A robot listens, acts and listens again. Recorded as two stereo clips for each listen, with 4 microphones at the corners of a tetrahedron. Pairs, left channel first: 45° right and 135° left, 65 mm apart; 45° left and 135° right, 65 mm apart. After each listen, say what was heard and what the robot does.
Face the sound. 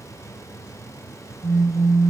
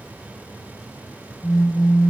The phone buzzing: 60° left. Turn 60° left.
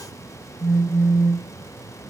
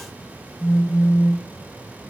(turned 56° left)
Found it: a phone buzzing, straight ahead, over 4 m away.